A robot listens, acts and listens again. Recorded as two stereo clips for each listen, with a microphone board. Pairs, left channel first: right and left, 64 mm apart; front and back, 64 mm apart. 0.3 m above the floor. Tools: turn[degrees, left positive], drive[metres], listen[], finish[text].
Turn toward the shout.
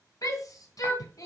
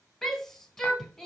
Thought: The shout: 85° right.
Action: turn[-85]
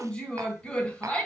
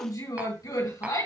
Thought: The shout is now 15° right.
Action: turn[-15]
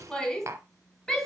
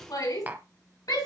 Action: finish[Facing the shout.]